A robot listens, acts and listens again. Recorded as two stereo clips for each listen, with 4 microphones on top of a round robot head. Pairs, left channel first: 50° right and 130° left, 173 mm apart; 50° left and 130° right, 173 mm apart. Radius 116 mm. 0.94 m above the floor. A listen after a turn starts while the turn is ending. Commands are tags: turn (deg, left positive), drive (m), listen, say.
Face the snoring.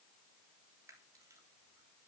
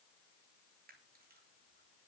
<listen/>
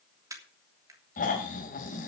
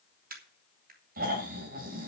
<turn deg="-90"/>
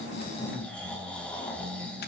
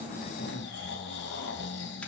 <turn deg="35"/>
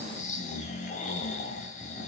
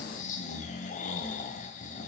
<say>Found it: snoring, straight ahead, 2 to 4 m away.</say>